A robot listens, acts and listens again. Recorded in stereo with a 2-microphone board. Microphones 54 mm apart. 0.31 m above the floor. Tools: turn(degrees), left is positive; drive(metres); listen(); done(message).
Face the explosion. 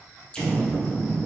turn(degrees=20)
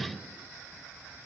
listen()
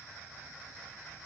done("I heard an explosion, but can't make it out now. It was about straight ahead or 140° left.")